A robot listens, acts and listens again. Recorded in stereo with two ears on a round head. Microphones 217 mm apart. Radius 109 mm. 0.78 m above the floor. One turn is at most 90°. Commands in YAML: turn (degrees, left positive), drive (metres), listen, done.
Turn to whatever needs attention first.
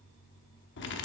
listen: true
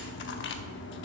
listen: true
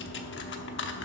done: "I can't make out anything urgent to turn to."